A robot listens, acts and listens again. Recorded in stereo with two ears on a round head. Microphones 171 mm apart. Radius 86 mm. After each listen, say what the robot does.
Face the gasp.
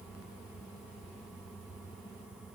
Keep listening.
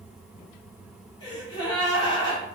Turn 30° left.
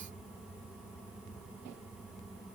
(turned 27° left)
Keep listening.
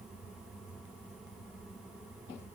I heard a gasp, but can't make it out now. It was about straight ahead or 125° left.